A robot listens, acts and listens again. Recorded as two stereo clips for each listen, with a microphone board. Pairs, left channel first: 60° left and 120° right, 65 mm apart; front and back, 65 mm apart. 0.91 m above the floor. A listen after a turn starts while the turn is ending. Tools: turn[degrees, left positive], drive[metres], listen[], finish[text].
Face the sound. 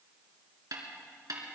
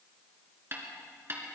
Thought: The snare drum: 130° right.
Action: turn[-130]
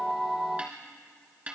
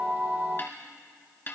Thought: The snare drum is now 50° right.
Action: turn[-50]
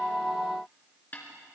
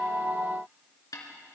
Action: finish[Facing the snare drum, 2 to 4 m away.]